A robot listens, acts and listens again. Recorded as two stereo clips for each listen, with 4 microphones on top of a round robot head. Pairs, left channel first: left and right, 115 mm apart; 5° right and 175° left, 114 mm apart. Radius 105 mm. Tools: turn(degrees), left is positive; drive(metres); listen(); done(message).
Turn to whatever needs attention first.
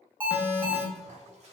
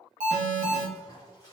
turn(degrees=-165)
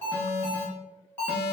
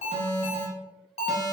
turn(degrees=15)
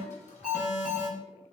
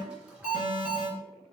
done("Facing the alarm.")